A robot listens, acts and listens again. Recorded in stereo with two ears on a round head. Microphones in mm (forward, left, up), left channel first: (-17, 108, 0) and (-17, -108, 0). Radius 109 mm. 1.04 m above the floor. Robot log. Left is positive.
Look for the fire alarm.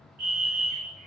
note: The fire alarm: about 40° right or 140° right.
cmd yaw -40
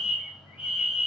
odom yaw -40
end: Found it: a fire alarm, straight ahead.